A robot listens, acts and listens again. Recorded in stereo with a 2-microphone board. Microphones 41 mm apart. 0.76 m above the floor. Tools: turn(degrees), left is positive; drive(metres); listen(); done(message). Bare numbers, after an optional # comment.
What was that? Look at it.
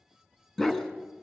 turn(30)
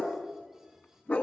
# So it is at 140° left.
turn(140)
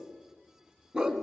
# The dog barking is now 20° right.
turn(-20)
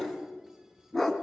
done("Found it: a dog barking, straight ahead.")